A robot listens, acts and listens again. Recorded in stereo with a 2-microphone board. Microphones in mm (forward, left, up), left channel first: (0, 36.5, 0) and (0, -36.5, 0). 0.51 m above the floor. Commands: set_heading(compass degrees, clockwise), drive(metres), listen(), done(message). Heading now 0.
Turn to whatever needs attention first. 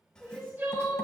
set_heading(30)
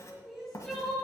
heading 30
done("Facing the crying.")